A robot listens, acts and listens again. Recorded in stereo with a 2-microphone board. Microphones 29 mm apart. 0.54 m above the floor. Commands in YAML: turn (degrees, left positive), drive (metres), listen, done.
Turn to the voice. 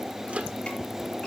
listen: true
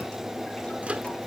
listen: true
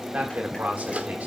turn: -70
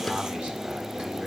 turn: -35
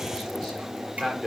turn: -10
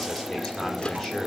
done: "Facing the man speaking."